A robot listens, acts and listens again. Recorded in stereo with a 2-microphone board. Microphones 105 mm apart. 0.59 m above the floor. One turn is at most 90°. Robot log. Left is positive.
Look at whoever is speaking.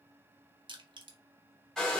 cmd idle
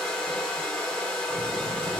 note: The child speaking: about 60° left or 120° left.
cmd yaw +60
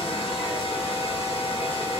end: Found it: a child speaking, straight ahead.